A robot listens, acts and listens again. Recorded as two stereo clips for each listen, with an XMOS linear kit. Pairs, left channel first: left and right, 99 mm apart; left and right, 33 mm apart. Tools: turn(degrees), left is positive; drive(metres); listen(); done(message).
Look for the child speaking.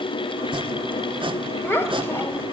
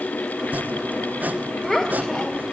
turn(degrees=25)
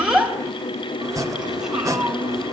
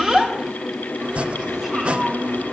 done("Facing the child speaking.")